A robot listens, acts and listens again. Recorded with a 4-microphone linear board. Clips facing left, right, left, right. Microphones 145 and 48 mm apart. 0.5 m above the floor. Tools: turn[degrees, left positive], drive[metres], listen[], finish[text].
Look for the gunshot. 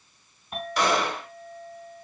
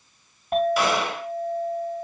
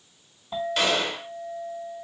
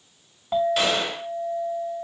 Action: turn[-30]
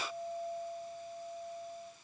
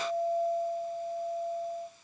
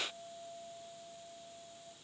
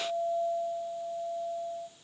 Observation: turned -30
Action: listen[]
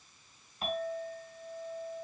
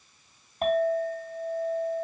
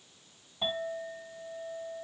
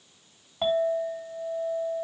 Action: finish[I heard a gunshot, but can't make it out now. It was about 25° left or 145° right.]